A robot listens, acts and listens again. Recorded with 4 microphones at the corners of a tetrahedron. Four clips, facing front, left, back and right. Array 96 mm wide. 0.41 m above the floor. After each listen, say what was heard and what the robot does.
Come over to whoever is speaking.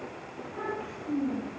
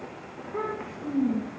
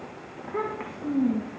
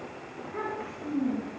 The child speaking: 170° left. Turn 170° left.
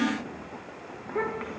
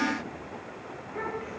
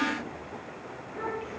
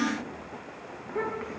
The child speaking is now 15° right. Turn 15° right.
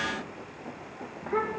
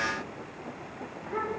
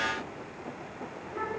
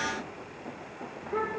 Drive 1.0 m forward.
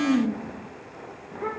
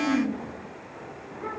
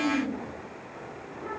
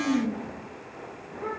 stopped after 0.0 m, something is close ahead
Something is in my way. I am facing the child speaking but have not reached it.